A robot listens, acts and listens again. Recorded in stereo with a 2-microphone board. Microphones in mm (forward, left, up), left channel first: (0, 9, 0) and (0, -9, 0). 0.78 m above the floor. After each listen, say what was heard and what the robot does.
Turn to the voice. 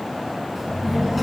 Turn 30° right.
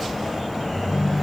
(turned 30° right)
So it is at 150° right. Turn 150° right.
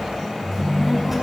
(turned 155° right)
The child speaking is now 10° right. Turn 10° right.
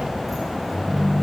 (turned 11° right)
Found it: a child speaking, straight ahead, over 4 m away.